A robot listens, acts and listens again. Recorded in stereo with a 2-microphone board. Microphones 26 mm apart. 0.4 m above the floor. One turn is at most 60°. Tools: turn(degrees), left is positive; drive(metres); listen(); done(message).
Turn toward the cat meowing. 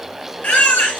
listen()
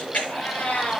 turn(degrees=60)
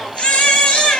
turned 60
listen()
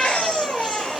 listen()
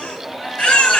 done("I heard a cat meowing, but can't make it out now. It was about 5° left or 55° left.")